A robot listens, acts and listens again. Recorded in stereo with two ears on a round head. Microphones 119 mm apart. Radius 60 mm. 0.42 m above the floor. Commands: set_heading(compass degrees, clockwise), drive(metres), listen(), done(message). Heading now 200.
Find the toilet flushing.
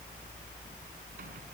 listen()
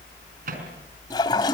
set_heading(165)
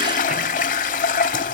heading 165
set_heading(55)
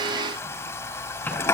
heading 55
set_heading(35)
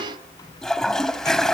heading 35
done("Found it: a toilet flushing, straight ahead.")